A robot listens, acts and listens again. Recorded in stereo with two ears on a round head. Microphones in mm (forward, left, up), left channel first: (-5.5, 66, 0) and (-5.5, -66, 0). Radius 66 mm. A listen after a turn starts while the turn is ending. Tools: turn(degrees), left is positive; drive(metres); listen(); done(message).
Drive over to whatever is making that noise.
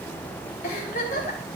turn(degrees=65)
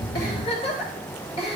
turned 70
turn(degrees=45)
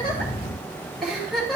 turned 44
drive(metres=1.0)
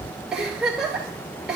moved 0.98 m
drive(metres=1.0)
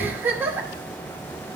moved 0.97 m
turn(degrees=-15)
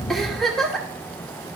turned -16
drive(metres=1.0)
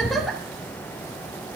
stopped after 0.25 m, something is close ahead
done("Arrived at the giggle, straight ahead.")